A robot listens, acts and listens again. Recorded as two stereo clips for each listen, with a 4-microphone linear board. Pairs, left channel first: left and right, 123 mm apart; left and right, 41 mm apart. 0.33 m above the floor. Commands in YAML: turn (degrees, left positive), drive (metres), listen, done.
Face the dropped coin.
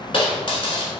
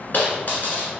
turn: 50
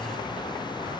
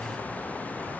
listen: true
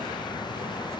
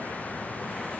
done: "I heard a dropped coin, but can't make it out now. It was about straight ahead or 80° left."